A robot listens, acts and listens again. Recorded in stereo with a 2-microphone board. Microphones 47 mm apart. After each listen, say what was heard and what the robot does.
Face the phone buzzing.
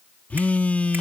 The phone buzzing: about 30° left or 150° left. Turn 30° left.
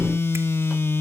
So it is at 115° left. Turn 115° left.
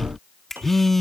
Found it: a phone buzzing, straight ahead.